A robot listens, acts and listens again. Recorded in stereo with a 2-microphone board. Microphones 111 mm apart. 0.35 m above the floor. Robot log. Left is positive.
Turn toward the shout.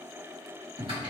cmd idle
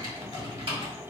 cmd idle
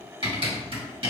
end: I can't make out a shout to turn to.